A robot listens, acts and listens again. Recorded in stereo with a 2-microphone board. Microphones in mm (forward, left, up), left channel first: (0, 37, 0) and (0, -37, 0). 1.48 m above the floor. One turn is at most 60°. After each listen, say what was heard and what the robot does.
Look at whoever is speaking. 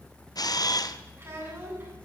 The child speaking: about 35° right or 145° right. Turn 35° right.
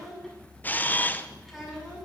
Found it: a child speaking, straight ahead.